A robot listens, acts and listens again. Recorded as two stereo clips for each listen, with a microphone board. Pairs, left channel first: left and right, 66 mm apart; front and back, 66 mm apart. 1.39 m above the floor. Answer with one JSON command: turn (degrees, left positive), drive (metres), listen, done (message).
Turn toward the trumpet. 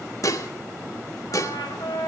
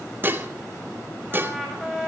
{"turn": 90}
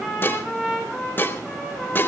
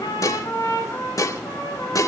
{"done": "Found it: a trumpet, straight ahead."}